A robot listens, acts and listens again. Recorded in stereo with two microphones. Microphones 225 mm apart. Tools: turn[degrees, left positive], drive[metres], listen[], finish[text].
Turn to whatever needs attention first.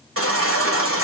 Action: turn[-90]
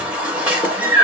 Action: finish[Facing the baby crying, 1 to 2 m away.]